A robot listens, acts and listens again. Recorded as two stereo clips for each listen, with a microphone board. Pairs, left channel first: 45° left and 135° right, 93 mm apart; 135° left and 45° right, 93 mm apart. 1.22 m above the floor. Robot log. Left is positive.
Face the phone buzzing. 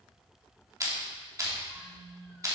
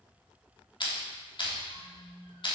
note: The phone buzzing: 80° right.
cmd yaw -80
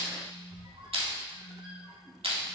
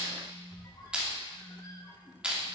note: The phone buzzing is now 15° right.
cmd yaw -15
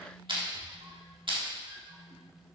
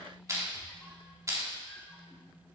note: The phone buzzing is now 10° left.
cmd yaw +10
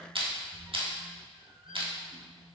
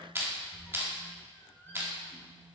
end: Facing the phone buzzing.